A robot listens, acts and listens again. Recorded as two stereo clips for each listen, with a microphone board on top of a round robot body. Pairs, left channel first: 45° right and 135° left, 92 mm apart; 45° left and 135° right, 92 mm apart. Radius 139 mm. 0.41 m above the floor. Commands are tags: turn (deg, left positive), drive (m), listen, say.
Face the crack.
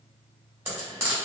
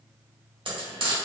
<listen/>
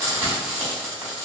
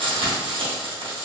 <listen/>
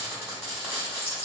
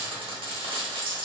<say>I can't make out a crack to turn to.</say>